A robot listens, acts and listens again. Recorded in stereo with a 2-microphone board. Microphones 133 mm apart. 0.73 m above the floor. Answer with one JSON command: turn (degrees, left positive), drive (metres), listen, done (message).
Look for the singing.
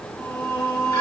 {"turn": -30}
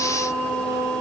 {"turn": -150}
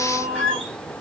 {"turn": -30}
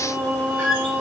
{"turn": -15}
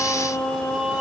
{"done": "Found it: singing, straight ahead."}